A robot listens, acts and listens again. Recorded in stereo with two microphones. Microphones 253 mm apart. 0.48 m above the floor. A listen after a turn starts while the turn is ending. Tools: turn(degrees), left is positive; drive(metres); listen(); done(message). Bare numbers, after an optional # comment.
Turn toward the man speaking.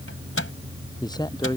# The man speaking: about 15° left or 165° left.
turn(15)
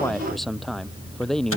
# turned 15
turn(30)
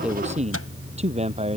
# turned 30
# So it is at 25° right.
turn(-25)
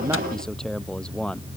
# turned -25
done("Found it: a man speaking, straight ahead.")